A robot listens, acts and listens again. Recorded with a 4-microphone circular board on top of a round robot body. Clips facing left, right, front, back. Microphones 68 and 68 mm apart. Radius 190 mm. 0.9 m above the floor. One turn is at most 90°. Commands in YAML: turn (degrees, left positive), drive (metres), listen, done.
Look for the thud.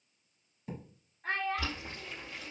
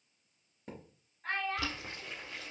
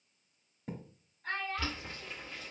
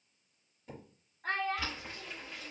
turn: -50
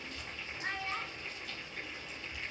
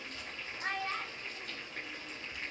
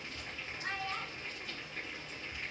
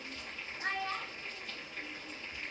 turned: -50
done: "I heard a thud from this way, but can't make it out now."